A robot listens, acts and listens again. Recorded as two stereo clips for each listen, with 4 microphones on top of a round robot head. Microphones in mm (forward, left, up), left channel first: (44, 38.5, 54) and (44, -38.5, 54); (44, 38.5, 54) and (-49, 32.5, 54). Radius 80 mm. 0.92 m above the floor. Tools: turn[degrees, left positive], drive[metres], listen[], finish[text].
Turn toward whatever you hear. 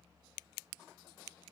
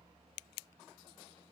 Action: listen[]
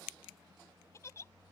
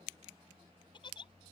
Thought: The giggle: 35° left.
Action: turn[35]
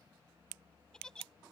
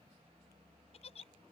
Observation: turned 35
Thought: The giggle is now 10° left.
Action: turn[10]
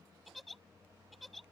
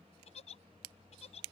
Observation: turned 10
Action: finish[Facing the giggle.]